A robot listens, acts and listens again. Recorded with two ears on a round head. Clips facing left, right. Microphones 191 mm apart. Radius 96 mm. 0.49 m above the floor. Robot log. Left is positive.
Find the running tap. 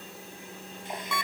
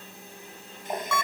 note: The running tap: about 40° right or 140° right.
cmd yaw -40
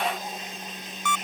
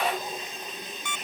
note: So it is at 95° right.
cmd yaw -95
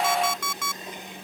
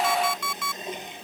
note: The running tap is now 20° right.
cmd yaw -20
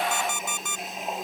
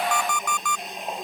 end: Facing the running tap.